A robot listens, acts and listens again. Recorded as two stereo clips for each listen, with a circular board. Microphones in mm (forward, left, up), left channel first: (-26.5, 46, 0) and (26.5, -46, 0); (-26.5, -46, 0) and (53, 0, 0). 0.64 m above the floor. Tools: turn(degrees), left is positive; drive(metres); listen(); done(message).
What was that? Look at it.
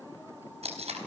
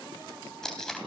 turn(degrees=-65)
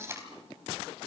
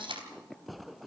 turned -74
done("Facing the tape being pulled.")